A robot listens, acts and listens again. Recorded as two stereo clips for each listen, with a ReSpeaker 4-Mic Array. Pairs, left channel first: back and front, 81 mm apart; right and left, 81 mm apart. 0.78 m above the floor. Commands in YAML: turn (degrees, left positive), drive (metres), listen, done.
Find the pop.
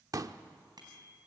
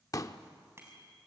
turn: -45
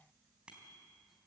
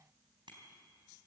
done: "Facing where the pop came from. I can't hear it now."